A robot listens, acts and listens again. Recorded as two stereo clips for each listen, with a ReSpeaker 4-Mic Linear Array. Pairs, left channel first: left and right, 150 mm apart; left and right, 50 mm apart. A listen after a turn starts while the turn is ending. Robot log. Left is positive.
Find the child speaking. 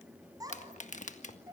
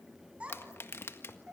note: The child speaking: about 25° right or 155° right.
cmd yaw -25
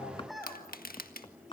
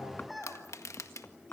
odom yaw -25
end: Found it: a child speaking, straight ahead.